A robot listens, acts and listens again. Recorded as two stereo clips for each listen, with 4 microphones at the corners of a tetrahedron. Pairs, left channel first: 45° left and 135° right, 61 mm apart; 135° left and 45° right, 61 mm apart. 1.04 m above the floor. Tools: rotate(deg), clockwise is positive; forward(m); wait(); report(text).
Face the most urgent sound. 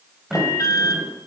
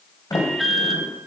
rotate(-45)
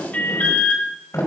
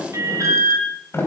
rotate(15)
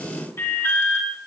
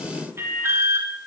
report("Found it: an alarm, straight ahead, 2 to 4 m away.")